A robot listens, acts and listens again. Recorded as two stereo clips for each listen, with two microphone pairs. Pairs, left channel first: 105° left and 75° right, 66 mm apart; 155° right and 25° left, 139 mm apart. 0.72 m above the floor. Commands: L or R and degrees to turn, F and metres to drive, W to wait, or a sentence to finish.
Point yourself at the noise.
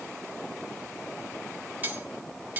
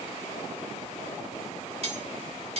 R15
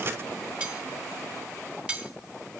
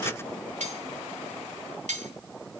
Found it: cutlery clinking, straight ahead, 2 to 4 m away.